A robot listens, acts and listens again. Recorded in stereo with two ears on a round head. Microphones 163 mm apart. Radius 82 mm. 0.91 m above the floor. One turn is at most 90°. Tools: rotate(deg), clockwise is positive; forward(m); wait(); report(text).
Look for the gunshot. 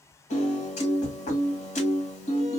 wait()
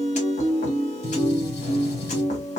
rotate(-65)
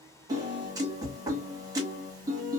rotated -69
wait()
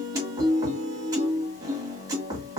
report("I heard a gunshot, but can't make it out now. It was about 5° right or 45° left.")